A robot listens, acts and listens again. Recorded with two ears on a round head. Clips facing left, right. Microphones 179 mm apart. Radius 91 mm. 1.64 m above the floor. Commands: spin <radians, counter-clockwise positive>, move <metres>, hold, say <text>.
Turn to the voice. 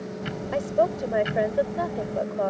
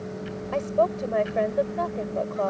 spin 0.52
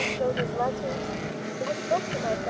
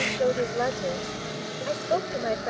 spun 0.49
spin -0.35
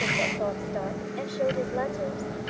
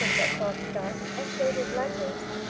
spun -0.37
hold
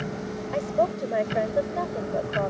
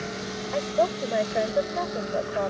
say Facing the woman speaking.